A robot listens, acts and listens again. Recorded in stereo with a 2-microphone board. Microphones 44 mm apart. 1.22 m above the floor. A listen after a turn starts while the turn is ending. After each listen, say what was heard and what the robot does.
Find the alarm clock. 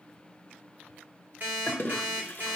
The alarm clock: about 45° right or 135° right. Turn 45° right.
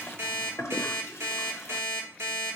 So it is at 90° right. Turn 90° right.
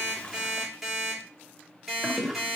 Found it: an alarm clock, straight ahead, 1 to 2 m away.